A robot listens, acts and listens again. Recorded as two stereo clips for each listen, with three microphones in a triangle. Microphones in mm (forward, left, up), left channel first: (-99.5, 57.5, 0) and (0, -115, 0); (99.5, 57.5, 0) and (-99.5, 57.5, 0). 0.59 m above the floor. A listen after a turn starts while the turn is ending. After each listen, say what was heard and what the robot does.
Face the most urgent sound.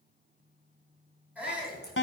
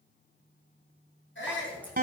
The shout: 25° left. Turn 25° left.
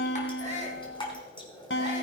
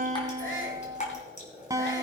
Found it: a shout, straight ahead, over 4 m away.